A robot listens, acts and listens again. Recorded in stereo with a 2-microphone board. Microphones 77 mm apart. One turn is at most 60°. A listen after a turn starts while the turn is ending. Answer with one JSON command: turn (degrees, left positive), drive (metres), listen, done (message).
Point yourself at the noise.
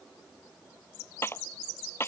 {"turn": 30}
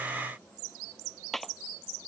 {"done": "Facing the clap."}